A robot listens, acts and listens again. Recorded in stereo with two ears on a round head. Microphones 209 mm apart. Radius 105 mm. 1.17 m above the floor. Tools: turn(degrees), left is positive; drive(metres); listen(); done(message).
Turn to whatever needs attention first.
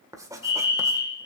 turn(degrees=20)
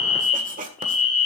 done("Found it: a fire alarm, straight ahead.")